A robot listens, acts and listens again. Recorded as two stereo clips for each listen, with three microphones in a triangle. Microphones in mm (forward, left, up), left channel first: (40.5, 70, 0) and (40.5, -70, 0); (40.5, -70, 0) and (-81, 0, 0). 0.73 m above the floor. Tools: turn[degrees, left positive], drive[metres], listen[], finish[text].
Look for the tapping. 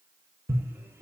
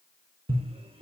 Thought: The tapping: 160° right.
Action: turn[-160]
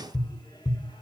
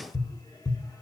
Thought: The tapping is now 30° left.
Action: turn[30]
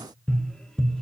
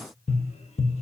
Action: finish[Facing the tapping, under 1 m away.]